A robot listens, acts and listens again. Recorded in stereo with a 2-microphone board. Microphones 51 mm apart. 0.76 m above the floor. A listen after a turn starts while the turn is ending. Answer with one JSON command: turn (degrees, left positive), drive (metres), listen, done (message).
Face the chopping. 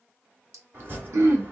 {"turn": -40}
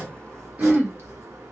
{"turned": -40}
{"turn": -100}
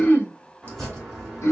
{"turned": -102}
{"done": "Facing the chopping."}